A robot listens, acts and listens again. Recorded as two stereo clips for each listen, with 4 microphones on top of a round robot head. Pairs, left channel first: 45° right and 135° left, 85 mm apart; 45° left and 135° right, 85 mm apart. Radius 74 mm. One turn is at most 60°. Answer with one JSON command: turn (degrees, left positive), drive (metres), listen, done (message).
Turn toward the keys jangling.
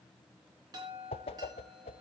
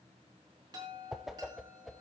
{"listen": true}
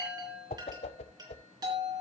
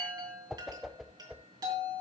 {"listen": true}
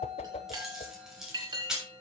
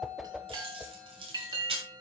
{"turn": -60}
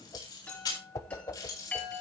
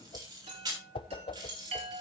{"turn": -60}
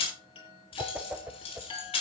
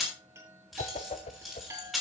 {"turn": -45}
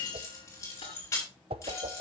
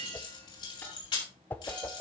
{"turn": 10}
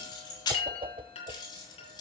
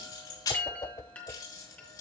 {"done": "Found it: keys jangling, straight ahead, over 4 m away."}